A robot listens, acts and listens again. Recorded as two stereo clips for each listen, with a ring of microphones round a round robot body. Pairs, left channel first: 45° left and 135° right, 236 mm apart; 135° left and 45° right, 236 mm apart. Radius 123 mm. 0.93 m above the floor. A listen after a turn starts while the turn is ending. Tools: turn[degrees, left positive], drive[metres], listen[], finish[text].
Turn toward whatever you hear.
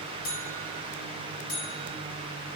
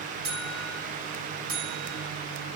Thought: The buzzer: 10° right.
Action: turn[-10]
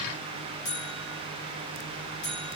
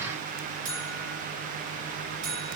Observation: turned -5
Action: finish[Found it: a buzzer, straight ahead.]